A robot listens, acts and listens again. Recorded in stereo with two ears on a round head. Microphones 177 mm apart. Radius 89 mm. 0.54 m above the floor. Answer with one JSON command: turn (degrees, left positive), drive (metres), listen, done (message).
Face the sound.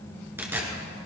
{"turn": -30}
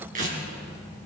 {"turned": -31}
{"turn": -140}
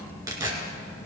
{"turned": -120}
{"turn": -20}
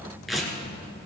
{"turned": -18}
{"done": "Found it: tearing paper, straight ahead, 2 to 4 m away."}